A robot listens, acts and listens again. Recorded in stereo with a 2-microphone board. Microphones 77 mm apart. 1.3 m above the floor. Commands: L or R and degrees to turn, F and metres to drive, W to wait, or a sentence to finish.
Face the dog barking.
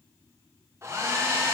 W
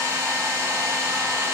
W
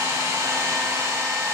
I can't make out a dog barking, only a hair dryer.